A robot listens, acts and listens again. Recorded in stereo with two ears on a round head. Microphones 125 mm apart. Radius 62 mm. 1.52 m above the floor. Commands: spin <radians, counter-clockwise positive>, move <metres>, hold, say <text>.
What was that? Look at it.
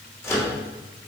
spin 0.35
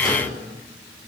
hold
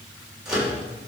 say Facing the microwave.